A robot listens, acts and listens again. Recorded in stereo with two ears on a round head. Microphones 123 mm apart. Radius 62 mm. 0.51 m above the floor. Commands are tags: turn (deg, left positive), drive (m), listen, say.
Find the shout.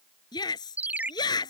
<turn deg="30"/>
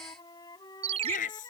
<turn deg="120"/>
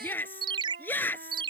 <turn deg="15"/>
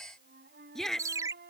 <say>Facing the shout.</say>